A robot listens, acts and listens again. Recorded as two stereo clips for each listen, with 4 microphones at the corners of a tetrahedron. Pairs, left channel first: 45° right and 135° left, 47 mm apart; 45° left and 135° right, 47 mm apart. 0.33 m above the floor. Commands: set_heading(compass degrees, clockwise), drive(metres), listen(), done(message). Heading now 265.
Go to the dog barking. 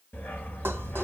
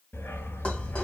drive(1.0)
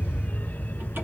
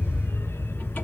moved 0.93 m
set_heading(255)
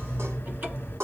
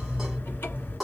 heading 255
drive(1.0)
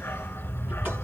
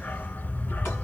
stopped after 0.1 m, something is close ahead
done("Arrived at the dog barking, straight ahead.")